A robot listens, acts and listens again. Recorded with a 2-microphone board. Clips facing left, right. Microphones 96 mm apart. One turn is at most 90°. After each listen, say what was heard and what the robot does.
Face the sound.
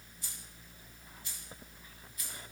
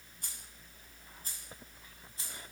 The keys jangling: about 30° right or 150° right. Turn 30° right.
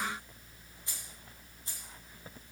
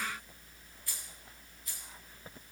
So it is at 30° left. Turn 30° left.
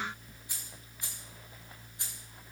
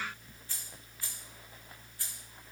The keys jangling is now 20° left. Turn 20° left.
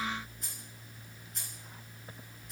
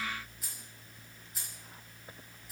Found it: keys jangling, straight ahead, 2 to 4 m away.